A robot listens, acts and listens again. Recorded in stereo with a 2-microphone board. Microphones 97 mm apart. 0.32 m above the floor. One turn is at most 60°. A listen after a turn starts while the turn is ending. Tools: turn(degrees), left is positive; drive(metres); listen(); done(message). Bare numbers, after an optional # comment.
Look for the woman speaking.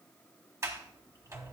listen()
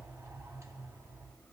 listen()
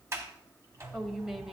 turn(-30)
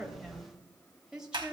turn(-30)
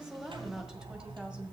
listen()
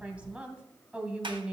turn(-30)
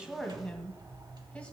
# So it is at 15° left.
turn(15)
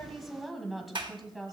done("Found it: a woman speaking, straight ahead.")